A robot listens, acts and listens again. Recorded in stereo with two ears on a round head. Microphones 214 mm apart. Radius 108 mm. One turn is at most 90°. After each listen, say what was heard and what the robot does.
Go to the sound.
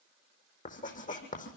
The writing: about 35° left or 145° left. Turn 35° left.
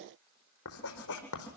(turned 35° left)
So it is at 110° left. Turn 90° left.
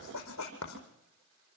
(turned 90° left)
The writing is now 60° left. Turn 60° left.
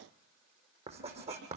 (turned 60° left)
The writing is now 25° right. Turn 25° right.
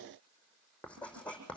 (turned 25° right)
Drive 1.0 m forward.
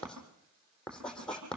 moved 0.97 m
Drive 1.0 m forward.
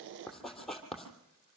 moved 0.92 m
Drive 1.0 m forward.
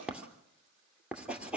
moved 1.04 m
Drive 1.0 m forward.
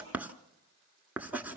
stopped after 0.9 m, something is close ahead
Arrived at the writing, straight ahead.